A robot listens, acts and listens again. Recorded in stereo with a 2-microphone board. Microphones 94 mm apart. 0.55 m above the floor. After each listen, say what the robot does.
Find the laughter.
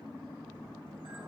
Keep listening.
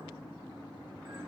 Keep listening.
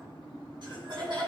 Turn 55° right.
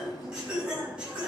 Turn 10° right.
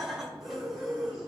Facing the laughter, over 4 m away.